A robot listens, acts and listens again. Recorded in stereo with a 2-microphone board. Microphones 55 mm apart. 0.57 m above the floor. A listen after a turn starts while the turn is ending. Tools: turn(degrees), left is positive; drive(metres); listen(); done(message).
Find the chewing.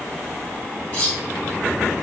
listen()
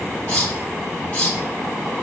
listen()
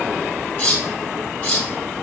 done("I can't make out chewing to turn to.")